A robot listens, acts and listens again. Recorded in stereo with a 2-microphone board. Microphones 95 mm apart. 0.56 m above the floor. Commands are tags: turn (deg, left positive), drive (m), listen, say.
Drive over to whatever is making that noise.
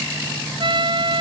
<turn deg="-55"/>
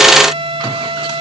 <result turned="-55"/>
<turn deg="-70"/>
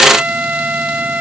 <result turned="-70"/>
<turn deg="-15"/>
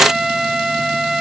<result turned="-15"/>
<drive m="1.0"/>
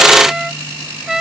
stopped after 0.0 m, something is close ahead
<say>Something is in my way. I am facing the trumpet but have not reached it.</say>